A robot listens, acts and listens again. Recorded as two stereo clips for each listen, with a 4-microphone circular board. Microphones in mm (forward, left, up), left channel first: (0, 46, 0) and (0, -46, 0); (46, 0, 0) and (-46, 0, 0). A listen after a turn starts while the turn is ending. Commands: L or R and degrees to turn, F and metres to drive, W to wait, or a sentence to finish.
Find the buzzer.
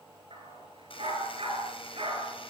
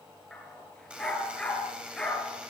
L100
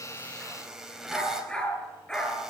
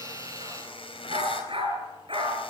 Found it: a buzzer, straight ahead, over 4 m away.